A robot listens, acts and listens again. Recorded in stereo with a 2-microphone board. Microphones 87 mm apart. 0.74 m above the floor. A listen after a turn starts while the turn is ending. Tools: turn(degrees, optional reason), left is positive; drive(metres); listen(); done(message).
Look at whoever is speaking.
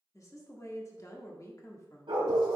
turn(degrees=40, reason="The woman speaking: about 40° left or 140° left.")
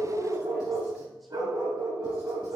listen()
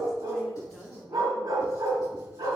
done("Found it: a woman speaking, straight ahead, 1 to 2 m away.")